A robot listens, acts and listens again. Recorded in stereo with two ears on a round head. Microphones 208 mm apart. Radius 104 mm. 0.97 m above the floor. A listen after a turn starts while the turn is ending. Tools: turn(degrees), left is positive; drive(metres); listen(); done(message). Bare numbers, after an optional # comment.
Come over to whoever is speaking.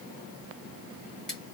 listen()
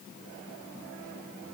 listen()
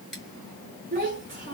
# The child speaking: about 40° right or 140° right.
turn(-40)
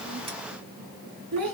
# So it is at 100° right.
turn(-100)
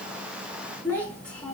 drive(1.0)
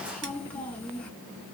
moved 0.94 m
drive(1.0)
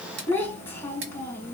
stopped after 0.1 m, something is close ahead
# The child speaking is now 10° left.
turn(10)
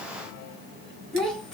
done("I am next to the child speaking.")